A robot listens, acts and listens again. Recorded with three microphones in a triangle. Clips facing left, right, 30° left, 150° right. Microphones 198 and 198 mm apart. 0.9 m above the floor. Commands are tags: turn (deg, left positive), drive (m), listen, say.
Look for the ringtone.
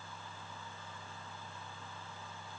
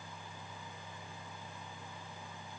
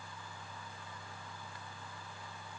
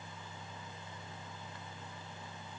<listen/>
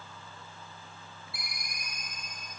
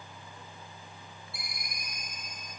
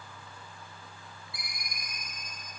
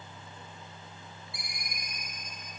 <turn deg="95"/>
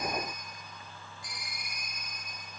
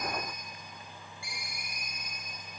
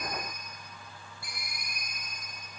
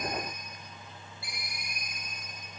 <turn deg="-10"/>
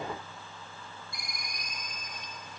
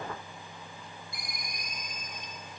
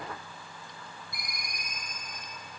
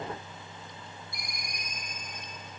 <say>Found it: a ringtone, straight ahead.</say>